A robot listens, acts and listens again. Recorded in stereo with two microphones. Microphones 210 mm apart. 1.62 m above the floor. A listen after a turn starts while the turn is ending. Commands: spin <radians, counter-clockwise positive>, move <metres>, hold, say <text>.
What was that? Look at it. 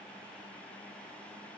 hold
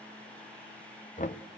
spin 0.61
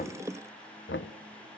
spin 1.83
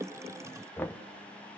spin 0.17
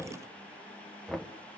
say Facing the knocking, 1 to 2 m away.